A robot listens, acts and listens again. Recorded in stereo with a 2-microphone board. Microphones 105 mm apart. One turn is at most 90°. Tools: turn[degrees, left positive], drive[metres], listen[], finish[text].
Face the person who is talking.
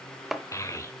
Thought: The child speaking: about 30° left or 150° left.
Action: turn[30]
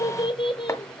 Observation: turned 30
Thought: So it is at 120° left.
Action: turn[90]
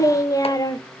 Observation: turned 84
Thought: The child speaking is now 40° left.
Action: turn[40]
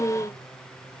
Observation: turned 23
Thought: The child speaking is now 15° left.
Action: turn[15]
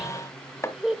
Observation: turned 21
Action: finish[Found it: a child speaking, straight ahead.]